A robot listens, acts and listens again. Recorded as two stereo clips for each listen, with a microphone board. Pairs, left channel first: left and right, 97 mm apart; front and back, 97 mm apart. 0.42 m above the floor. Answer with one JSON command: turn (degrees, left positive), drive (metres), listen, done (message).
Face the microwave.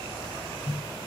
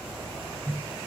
{"turn": 125}
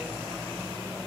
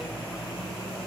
{"listen": true}
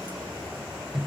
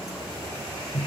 {"done": "Facing the microwave."}